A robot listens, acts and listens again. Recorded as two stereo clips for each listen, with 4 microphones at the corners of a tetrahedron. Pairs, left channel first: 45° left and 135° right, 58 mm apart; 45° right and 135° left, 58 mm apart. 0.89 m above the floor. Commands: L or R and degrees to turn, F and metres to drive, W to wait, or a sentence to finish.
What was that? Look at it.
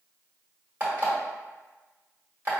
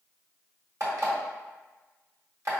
L170
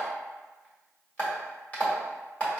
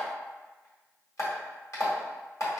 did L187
R20
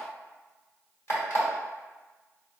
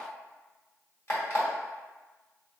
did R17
Facing the alarm clock.